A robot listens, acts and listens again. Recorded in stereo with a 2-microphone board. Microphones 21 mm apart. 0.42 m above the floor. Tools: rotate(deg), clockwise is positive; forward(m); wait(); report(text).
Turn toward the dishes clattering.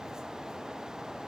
wait()
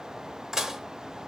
rotate(30)
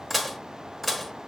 report("Found it: dishes clattering, straight ahead.")